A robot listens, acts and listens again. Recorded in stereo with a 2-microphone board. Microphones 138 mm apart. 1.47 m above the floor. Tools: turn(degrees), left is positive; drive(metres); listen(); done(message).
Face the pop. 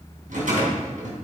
listen()
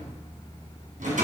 listen()
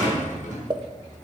turn(degrees=-35)
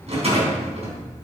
listen()
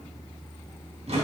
done("I heard a pop, but can't make it out now. It was about straight ahead or 110° right.")